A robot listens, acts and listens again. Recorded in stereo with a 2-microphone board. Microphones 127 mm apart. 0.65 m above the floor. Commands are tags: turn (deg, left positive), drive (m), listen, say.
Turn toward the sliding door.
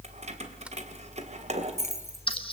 <listen/>
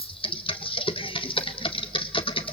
<listen/>
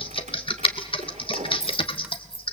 <say>I can't make out a sliding door, only keys jangling and typing on a keyboard.</say>